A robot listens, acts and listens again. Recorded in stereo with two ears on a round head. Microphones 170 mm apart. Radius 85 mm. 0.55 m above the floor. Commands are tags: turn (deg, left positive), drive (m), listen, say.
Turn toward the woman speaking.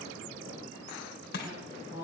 <turn deg="-30"/>
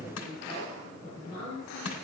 <turn deg="15"/>
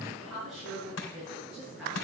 <say>Facing the woman speaking, over 4 m away.</say>